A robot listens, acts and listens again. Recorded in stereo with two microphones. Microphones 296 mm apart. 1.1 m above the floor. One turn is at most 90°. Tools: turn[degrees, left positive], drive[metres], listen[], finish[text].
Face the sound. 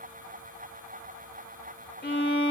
Thought: The violin: about 35° left or 145° left.
Action: turn[35]
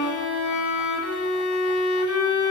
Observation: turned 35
Thought: So it is at 105° left.
Action: turn[90]
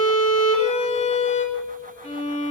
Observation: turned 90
Thought: The violin is now 25° left.
Action: turn[25]
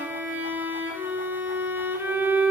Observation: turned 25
Thought: The violin is now 10° right.
Action: turn[-10]
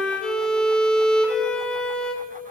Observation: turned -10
Action: finish[Facing the violin.]